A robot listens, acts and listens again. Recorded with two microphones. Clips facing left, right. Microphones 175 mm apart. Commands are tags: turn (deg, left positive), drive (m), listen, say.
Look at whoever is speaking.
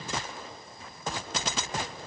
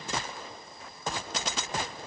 <listen/>
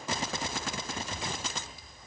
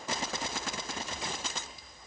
<listen/>
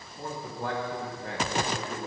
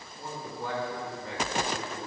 <turn deg="65"/>
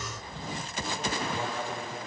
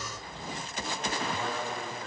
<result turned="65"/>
<turn deg="20"/>
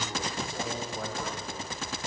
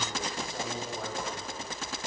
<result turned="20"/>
<say>Facing the man speaking, 2 to 4 m away.</say>